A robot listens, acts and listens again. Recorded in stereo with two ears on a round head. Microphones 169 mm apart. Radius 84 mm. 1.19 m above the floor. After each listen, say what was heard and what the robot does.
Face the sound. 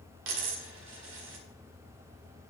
The dropped coin: about 70° right or 110° right. Turn 70° right.
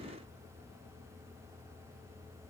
Keep listening.
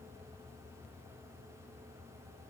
I heard a dropped coin, but can't make it out now. It was about straight ahead or 40° right.